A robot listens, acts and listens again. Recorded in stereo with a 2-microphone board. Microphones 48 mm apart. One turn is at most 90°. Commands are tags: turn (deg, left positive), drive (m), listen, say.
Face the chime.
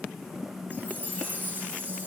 <turn deg="-40"/>
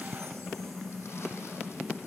<listen/>
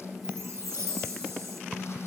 <turn deg="-90"/>
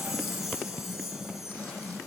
<say>Facing the chime, 2 to 4 m away.</say>